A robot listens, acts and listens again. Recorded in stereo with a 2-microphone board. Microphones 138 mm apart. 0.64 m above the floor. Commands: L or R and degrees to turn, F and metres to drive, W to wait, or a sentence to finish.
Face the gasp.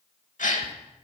L70
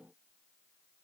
W
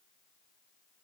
I heard a gasp, but can't make it out now. It was about straight ahead or 40° left.